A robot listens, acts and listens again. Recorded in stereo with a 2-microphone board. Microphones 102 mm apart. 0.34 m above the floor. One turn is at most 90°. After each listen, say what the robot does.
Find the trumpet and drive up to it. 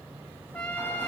Turn 30° left.
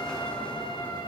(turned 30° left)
Keep listening.
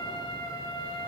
Turn 90° left.
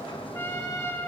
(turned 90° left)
Turn 30° left.
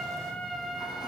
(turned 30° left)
Drive 1.0 m forward.
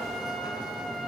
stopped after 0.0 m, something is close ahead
Keep listening.
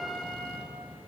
Blocked. The trumpet is further on, straight ahead.